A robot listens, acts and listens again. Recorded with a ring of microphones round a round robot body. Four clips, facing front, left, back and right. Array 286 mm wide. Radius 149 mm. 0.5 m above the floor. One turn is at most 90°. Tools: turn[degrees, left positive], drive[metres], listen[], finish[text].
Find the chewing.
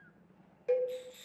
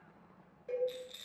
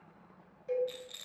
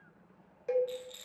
Action: listen[]
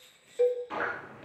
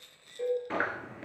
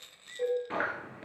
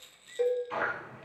Thought: The chewing: 115° left.
Action: turn[90]
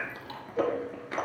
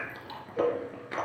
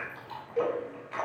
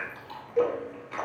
Thought: The chewing is now 45° left.
Action: turn[45]
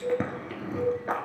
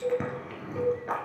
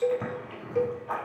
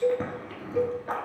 Action: finish[Facing the chewing.]